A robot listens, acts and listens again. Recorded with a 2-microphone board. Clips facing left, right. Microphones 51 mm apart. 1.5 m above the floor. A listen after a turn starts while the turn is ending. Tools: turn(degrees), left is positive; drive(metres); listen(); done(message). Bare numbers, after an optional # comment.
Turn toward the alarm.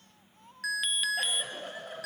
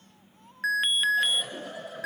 # The alarm: about 30° right or 150° right.
turn(-30)
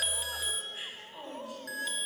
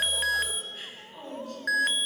# So it is at 115° right.
turn(-115)
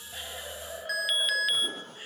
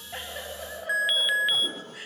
# The alarm is now 20° right.
turn(-20)
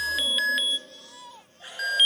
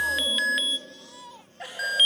done("Facing the alarm.")